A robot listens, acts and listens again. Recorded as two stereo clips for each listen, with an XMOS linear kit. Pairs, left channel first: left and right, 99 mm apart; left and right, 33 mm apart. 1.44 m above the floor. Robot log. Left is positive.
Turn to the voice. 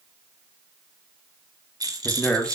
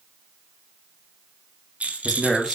cmd yaw +30
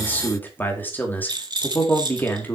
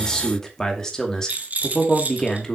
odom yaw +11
note: So it is at 160° left.
cmd yaw +160
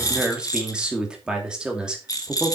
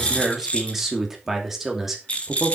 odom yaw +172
note: The man speaking is now 10° right.
cmd yaw -10
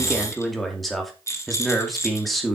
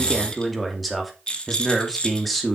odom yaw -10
end: Facing the man speaking.